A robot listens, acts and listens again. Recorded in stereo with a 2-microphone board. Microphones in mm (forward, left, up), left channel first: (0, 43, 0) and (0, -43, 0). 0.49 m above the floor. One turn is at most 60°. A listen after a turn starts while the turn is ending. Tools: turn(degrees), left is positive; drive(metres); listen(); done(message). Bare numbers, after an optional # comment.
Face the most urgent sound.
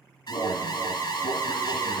# The alarm: about 65° left or 115° left.
turn(60)
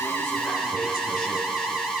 # So it is at 10° left.
turn(10)
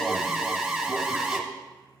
done("Found it: an alarm, straight ahead, 1 to 2 m away.")